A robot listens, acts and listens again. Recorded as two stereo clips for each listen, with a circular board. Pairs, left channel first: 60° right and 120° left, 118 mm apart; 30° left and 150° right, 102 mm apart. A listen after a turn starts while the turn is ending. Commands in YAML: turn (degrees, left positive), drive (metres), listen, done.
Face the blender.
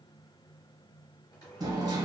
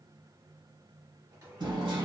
turn: -110
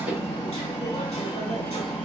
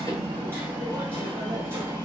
listen: true
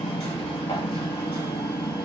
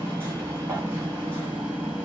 listen: true
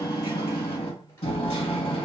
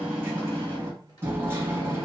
done: "Facing where the blender came from. I can't hear it now."